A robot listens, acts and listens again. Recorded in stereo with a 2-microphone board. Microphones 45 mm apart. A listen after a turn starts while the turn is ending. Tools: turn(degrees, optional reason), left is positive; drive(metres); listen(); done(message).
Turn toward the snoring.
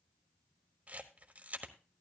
listen()
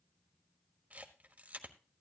listen()
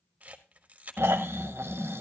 turn(degrees=-70, reason="The snoring: about 70° right or 110° right.")
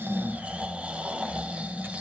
turn(degrees=-30, reason="So it is at 30° right.")
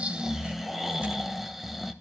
done("Found it: snoring, straight ahead, under 1 m away.")